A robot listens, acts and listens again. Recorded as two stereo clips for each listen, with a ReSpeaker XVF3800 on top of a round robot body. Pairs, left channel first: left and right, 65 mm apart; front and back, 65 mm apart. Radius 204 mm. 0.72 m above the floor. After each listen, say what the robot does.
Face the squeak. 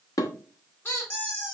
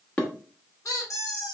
Turn 35° left.
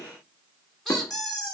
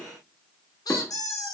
Found it: a squeak, straight ahead, 1 to 2 m away.